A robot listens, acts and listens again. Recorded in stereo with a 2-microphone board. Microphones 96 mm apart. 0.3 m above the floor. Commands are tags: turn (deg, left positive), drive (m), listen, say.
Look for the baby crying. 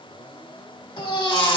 <turn deg="55"/>
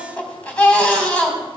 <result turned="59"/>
<turn deg="15"/>
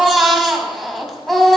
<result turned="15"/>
<say>Facing the baby crying, 1 to 2 m away.</say>